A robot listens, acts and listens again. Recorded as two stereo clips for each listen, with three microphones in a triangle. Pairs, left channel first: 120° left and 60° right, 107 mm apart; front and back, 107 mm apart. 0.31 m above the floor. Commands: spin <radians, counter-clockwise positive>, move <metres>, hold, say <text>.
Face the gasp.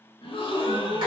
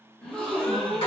spin 1.48
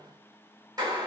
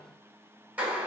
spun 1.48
say Facing where the gasp came from. I can't hear it now.